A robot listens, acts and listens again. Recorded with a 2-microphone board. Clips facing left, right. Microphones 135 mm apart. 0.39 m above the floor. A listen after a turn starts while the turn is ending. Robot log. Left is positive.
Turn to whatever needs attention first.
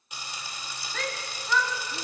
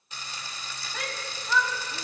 cmd yaw -30
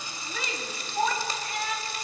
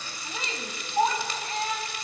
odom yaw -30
note: So it is at 145° right.
cmd yaw -145
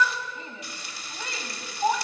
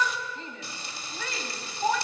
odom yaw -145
note: The shout is now 25° left.
cmd yaw +25
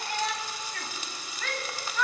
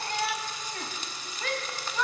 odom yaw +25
note: The shout is now 20° right.
cmd yaw -20
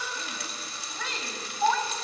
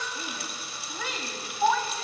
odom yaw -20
end: Found it: a shout, straight ahead, 2 to 4 m away.